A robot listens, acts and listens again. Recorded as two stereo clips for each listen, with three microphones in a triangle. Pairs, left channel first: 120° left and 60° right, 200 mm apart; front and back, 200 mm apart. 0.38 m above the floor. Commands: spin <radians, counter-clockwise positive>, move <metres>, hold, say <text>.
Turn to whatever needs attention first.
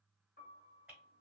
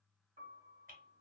hold
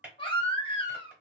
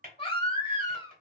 spin 1.05
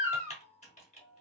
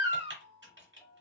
spin 0.26
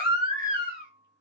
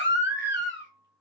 say Facing the baby crying, under 1 m away.